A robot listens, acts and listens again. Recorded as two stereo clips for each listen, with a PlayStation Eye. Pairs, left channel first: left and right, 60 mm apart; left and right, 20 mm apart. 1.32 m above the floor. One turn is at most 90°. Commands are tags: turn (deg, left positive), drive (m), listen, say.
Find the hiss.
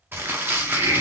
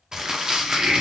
<turn deg="-70"/>
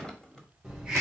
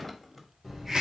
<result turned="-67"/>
<turn deg="-15"/>
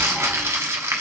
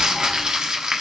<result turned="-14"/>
<listen/>
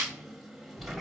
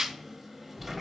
<say>Found it: a hiss, straight ahead, 1 to 2 m away.</say>